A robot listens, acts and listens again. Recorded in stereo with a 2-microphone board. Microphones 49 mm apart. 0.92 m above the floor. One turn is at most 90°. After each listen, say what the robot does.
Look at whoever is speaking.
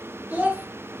Turn 35° right.
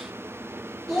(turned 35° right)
Facing the child speaking.